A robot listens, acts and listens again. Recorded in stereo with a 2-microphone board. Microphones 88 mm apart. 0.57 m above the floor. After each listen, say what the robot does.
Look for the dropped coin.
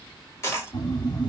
Turn 35° left.
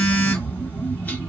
Keep listening.
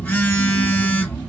I heard a dropped coin, but can't make it out now. It was about straight ahead or 110° left.